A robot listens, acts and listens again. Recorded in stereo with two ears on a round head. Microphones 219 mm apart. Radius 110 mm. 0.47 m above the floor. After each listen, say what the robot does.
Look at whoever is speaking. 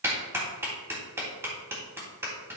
Keep listening.
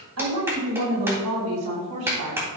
Turn 75° right.
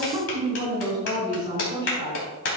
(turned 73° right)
Turn 20° right.
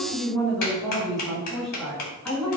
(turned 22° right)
Found it: a woman speaking, straight ahead.